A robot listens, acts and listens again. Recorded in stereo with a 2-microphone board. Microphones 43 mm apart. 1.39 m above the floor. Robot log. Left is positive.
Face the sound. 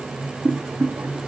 cmd yaw -90
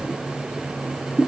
end: Found it: boiling, straight ahead, 2 to 4 m away.